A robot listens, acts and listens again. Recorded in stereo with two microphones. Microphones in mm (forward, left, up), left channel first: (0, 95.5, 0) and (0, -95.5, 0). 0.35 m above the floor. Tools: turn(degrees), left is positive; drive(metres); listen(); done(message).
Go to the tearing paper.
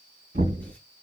listen()
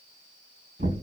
listen()
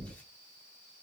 done("I can't make out tearing paper, only knocking.")